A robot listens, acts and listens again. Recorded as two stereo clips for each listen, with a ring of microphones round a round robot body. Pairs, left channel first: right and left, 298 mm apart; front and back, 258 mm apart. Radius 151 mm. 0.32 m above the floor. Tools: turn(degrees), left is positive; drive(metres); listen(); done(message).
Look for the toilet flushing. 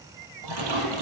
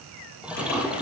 turn(degrees=95)
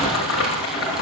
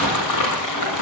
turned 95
listen()
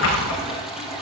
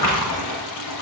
done("Facing the toilet flushing, 2 to 4 m away.")